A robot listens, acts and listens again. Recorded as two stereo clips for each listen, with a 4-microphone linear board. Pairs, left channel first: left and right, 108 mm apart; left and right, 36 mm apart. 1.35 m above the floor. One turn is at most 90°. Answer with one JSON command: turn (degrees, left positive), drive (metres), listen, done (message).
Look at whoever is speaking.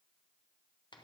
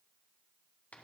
{"listen": true}
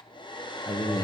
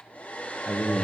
{"turn": 35}
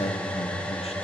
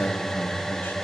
{"turn": 90}
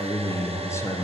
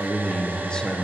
{"turn": 25}
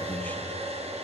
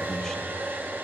{"listen": true}
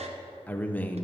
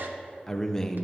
{"turn": 15}
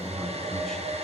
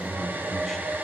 {"done": "Found it: a man speaking, straight ahead."}